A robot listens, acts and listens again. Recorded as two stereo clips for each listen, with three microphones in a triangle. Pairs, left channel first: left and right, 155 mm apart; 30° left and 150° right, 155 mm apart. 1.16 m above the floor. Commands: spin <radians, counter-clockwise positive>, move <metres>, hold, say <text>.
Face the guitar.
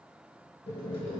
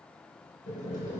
hold
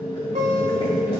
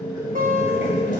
spin -2.27
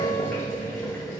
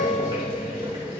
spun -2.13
hold
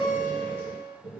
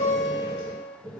say Facing the guitar, 1 to 2 m away.